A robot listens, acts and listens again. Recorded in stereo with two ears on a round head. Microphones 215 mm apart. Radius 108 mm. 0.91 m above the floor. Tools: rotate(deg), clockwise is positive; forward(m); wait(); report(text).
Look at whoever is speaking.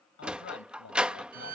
rotate(-55)
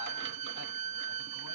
wait()
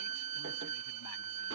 wait()
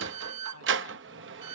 report("I heard a man speaking, but can't make it out now. It was about straight ahead or 70° left.")